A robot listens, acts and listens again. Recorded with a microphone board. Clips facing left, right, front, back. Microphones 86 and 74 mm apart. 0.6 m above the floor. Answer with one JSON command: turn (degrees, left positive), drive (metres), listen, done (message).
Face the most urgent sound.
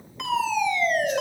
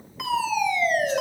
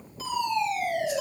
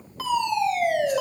{"turn": -175}
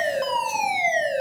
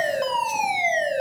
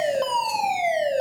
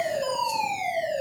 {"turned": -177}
{"done": "Found it: a fire alarm, straight ahead, over 4 m away."}